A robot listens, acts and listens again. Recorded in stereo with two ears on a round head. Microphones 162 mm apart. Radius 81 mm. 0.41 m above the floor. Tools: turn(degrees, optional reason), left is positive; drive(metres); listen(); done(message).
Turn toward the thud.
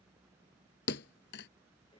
turn(degrees=65, reason="The thud: about 65° left or 115° left.")
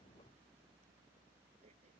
listen()
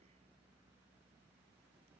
done("I heard a thud, but can't make it out now. It was about straight ahead or 50° left.")